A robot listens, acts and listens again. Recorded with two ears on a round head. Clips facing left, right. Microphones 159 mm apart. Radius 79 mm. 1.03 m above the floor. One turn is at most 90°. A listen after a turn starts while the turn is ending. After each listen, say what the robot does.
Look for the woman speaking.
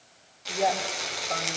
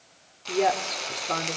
Turn 65° right.
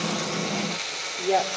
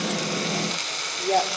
Facing the woman speaking, 2 to 4 m away.